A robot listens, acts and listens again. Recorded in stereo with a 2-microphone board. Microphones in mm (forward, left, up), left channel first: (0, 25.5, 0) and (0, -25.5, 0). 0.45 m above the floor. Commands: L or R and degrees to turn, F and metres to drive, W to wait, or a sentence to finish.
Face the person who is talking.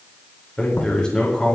L15
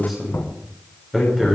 Found it: a man speaking, straight ahead.